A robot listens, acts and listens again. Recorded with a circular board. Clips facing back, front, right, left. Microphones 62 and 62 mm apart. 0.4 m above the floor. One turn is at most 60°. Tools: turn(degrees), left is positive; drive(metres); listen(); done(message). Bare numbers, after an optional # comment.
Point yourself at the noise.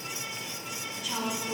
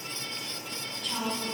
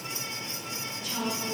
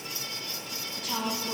# The woman speaking: 100° left.
turn(60)
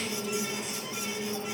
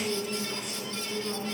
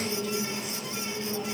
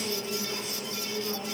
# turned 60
# The woman speaking is now 30° left.
turn(30)
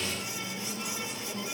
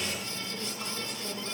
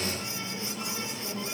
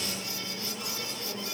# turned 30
# The woman speaking is now 20° right.
turn(-20)
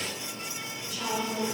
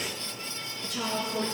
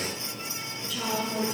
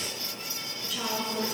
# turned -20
done("Found it: a woman speaking, straight ahead, over 4 m away.")